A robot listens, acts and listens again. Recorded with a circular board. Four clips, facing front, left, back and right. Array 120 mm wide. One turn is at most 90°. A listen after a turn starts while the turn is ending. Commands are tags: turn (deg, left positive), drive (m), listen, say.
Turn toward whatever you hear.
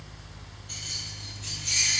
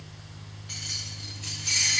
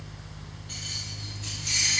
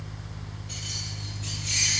<turn deg="90"/>
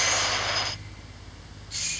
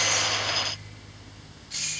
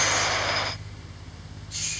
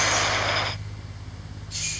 <turn deg="70"/>
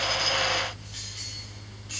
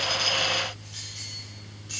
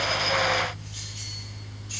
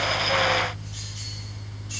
<turn deg="35"/>
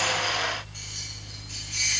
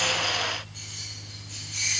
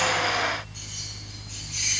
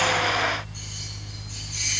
<turn deg="10"/>
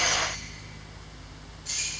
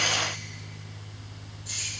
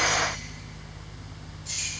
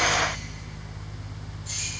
<say>Facing the keys jangling, 2 to 4 m away.</say>